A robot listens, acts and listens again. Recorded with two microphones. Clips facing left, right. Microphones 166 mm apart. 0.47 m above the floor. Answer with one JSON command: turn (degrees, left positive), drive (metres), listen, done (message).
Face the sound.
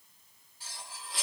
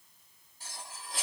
{"turn": -45}
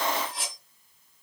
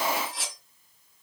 {"done": "Found it: cutlery clinking, straight ahead, 1 to 2 m away."}